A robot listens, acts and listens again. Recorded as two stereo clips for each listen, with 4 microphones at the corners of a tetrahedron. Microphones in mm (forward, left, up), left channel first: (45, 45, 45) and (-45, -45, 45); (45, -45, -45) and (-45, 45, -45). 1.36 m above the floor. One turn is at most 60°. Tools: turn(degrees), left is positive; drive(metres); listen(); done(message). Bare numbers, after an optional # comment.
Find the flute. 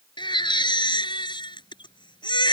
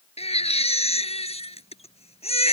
listen()
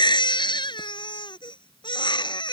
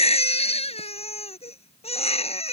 listen()
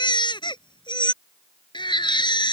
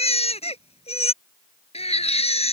done("I can't make out a flute to turn to.")